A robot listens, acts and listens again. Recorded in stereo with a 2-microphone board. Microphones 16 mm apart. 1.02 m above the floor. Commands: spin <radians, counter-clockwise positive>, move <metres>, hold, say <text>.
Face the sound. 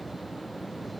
hold
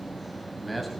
spin 0.52
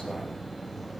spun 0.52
hold
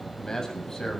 spin 2.44
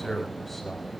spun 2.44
say Facing the man speaking.